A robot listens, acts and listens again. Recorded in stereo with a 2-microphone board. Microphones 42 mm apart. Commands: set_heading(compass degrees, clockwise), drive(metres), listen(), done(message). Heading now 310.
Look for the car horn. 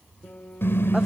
set_heading(240)
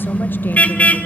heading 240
set_heading(200)
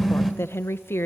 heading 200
done("Facing the car horn.")